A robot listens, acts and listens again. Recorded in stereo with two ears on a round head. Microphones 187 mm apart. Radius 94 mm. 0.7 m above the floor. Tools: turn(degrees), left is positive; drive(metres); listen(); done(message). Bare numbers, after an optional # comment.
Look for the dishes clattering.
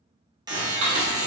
# The dishes clattering: about 70° right or 110° right.
turn(-70)
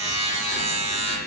listen()
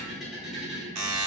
done("Found it: dishes clattering, straight ahead, 1 to 2 m away.")